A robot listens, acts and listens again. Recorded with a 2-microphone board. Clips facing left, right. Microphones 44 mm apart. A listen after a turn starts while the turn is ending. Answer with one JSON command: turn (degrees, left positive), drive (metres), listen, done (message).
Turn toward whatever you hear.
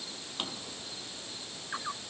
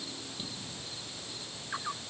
{"turn": 65}
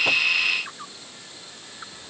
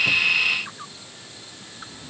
{"done": "Facing the drawer."}